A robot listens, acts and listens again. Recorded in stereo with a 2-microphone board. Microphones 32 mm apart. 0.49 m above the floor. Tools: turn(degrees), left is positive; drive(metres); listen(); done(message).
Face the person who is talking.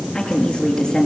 turn(degrees=25)
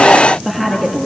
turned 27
done("Facing the woman speaking, over 4 m away.")